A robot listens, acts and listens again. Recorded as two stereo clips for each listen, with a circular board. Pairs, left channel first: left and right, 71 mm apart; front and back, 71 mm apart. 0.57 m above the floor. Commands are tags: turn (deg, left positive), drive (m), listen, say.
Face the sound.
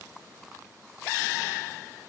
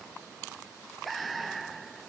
<listen/>
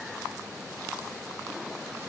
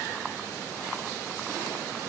<listen/>
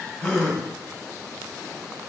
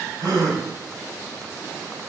<turn deg="175"/>
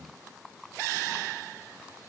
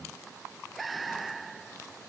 <say>I heard a gasp from this way, but can't make it out now.</say>